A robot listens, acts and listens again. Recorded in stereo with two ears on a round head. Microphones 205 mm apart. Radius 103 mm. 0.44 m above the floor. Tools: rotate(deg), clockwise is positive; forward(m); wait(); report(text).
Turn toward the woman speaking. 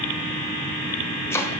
wait()
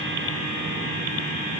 wait()
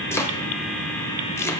report("I can't make out a woman speaking to turn to.")